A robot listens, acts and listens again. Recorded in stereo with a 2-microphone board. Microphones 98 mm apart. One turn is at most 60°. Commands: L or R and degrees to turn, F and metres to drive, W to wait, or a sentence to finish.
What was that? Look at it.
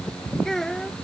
L30
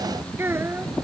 R25
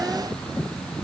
W
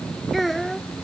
Facing the child speaking.